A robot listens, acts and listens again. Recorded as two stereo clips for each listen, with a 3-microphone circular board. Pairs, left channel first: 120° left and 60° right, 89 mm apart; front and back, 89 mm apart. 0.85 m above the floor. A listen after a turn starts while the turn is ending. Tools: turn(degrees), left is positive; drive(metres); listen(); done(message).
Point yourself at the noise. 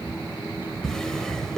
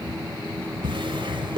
turn(degrees=-155)
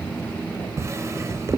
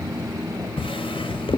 done("Facing the drawer, 2 to 4 m away.")